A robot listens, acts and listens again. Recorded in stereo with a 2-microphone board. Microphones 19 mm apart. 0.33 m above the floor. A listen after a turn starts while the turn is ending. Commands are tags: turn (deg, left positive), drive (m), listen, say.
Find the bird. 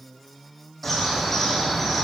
<turn deg="30"/>
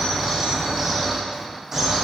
<turn deg="-15"/>
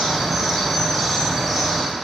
<say>Found it: a bird, straight ahead, 2 to 4 m away.</say>